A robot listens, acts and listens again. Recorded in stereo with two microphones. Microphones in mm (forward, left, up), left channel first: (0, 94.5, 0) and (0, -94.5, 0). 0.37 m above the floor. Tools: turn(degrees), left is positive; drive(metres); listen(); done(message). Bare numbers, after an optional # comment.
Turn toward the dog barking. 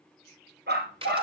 # The dog barking: about 65° right or 115° right.
turn(-65)
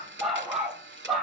done("Found it: a dog barking, straight ahead, 2 to 4 m away.")